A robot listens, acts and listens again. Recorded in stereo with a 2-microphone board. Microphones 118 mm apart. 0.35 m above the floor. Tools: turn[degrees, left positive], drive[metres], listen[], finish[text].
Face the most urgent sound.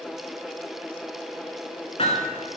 Action: listen[]
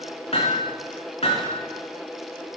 Action: listen[]
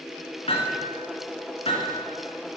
Action: finish[I can't make out anything urgent, only hammering.]